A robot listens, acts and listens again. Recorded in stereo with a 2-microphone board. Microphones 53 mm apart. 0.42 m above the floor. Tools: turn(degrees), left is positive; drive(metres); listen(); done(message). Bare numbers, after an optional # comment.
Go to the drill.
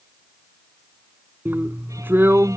# The drill: about 40° right or 140° right.
turn(-40)
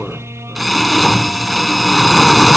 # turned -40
drive(1.0)
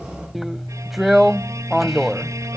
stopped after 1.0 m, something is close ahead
done("Arrived at the drill, straight ahead.")